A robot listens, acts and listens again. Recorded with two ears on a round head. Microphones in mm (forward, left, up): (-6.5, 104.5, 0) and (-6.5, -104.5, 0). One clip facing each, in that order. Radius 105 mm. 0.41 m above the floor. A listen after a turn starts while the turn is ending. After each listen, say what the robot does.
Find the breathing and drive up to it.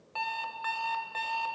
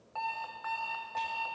Keep listening.
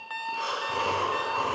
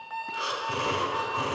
Turn 15° right.
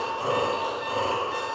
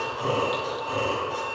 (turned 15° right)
Drive 1.0 m forward.
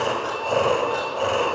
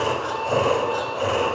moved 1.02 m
Drive 1.0 m forward.
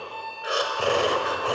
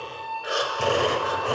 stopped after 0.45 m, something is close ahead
Arrived at the breathing, straight ahead.